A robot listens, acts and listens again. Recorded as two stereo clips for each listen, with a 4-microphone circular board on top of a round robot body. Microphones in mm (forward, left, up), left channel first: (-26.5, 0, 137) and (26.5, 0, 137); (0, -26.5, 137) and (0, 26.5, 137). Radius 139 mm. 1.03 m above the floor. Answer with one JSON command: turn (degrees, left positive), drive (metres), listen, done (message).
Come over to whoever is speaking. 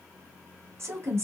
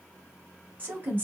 {"turn": 35}
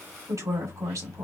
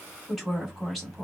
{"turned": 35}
{"drive": 1.0}
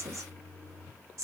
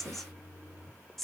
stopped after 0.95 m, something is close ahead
{"done": "I am next to the woman speaking."}